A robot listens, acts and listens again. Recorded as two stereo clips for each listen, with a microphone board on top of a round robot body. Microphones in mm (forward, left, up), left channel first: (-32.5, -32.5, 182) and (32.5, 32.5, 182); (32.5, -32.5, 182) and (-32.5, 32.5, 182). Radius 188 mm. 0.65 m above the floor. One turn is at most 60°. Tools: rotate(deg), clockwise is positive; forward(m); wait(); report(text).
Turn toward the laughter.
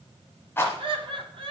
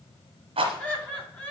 rotate(-25)
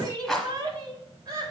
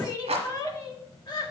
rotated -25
report("Found it: laughter, straight ahead.")